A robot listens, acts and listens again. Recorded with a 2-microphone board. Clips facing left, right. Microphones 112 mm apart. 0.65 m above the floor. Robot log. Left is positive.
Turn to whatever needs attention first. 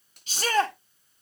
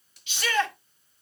note: The shout: about 40° left or 140° left.
cmd yaw +40
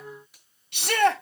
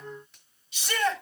note: So it is at 95° left.
cmd yaw +95
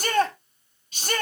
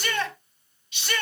note: The shout is now 45° left.
cmd yaw +45
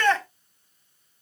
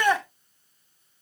note: The shout is now 15° right.
cmd yaw -15
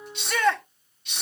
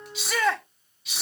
end: Found it: a shout, straight ahead.